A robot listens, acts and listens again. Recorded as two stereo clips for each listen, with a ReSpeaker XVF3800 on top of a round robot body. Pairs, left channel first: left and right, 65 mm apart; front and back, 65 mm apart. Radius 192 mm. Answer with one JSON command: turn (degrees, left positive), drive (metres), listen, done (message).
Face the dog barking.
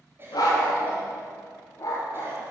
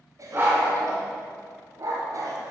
{"turn": 140}
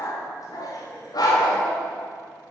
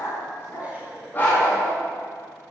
{"turn": 70}
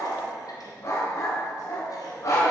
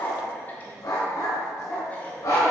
{"turn": 45}
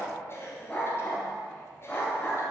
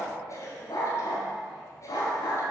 {"turn": 15}
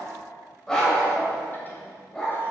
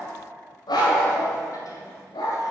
{"done": "Found it: a dog barking, straight ahead."}